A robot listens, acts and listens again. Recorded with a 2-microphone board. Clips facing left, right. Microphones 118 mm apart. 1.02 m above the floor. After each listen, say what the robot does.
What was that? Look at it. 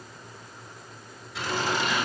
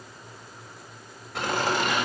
Turn 60° right.
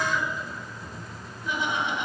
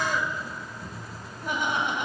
Turn 55° right.
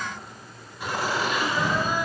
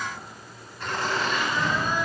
Turn 10° left.
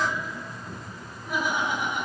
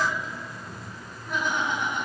Turn 10° left.
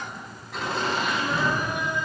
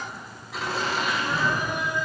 Facing the laughter, over 4 m away.